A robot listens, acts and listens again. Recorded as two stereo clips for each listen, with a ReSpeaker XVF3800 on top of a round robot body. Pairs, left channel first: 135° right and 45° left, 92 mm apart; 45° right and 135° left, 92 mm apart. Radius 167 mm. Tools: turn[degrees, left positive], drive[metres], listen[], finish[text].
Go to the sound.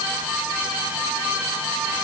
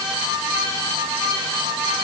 Action: listen[]
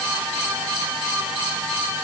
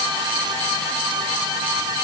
Action: listen[]
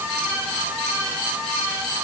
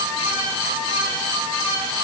Action: finish[I can't make out anything to turn to.]